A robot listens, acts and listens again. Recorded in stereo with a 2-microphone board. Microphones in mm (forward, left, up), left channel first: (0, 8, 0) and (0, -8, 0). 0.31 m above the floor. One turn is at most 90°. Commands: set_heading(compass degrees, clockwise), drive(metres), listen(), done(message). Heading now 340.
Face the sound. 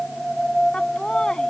set_heading(285)
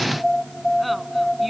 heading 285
listen()
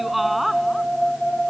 done("Found it: laughter, straight ahead.")